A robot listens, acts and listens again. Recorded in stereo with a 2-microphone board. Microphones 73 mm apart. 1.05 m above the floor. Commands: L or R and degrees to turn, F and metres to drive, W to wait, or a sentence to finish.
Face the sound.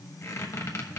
L40
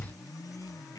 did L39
L90
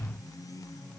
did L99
W
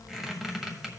Found it: a squeak, straight ahead.